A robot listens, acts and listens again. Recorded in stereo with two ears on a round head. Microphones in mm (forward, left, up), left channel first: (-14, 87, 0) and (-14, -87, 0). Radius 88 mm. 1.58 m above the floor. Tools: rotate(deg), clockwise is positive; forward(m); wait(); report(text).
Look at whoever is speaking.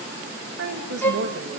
rotate(60)
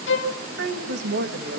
rotate(60)
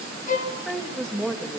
report("Facing the woman speaking, 2 to 4 m away.")